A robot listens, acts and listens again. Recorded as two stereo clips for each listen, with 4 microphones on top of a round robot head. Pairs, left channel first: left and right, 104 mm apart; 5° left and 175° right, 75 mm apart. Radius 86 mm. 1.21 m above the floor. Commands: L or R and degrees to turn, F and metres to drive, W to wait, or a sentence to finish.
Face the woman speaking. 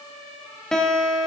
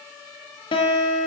W
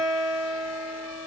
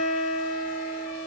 W
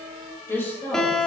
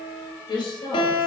L20
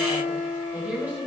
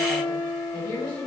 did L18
R20
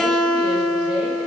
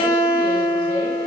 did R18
W
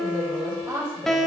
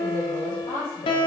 R20
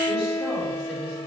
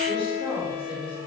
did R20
W
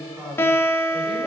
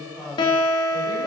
Found it: a woman speaking, straight ahead.